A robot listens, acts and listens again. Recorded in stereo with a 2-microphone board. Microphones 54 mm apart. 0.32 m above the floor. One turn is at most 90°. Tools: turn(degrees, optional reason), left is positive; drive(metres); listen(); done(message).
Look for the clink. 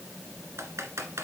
listen()
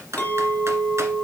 turn(degrees=30, reason="The clink: about 30° left or 150° left.")
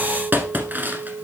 turn(degrees=90, reason="So it is at 120° left.")
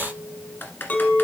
turn(degrees=40, reason="The clink is now 40° left.")
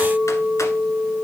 done("Facing the clink, 1 to 2 m away.")